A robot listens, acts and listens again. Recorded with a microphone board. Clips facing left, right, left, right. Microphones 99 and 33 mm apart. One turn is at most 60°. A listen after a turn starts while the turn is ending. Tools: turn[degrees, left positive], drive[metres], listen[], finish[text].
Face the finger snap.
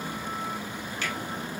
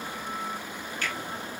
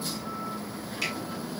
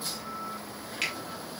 Thought: The finger snap: about 45° right or 135° right.
Action: turn[-45]
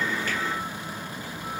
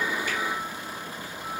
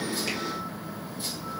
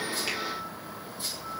Action: listen[]
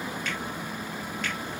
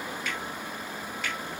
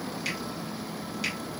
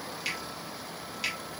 Action: finish[Found it: a finger snap, straight ahead, 2 to 4 m away.]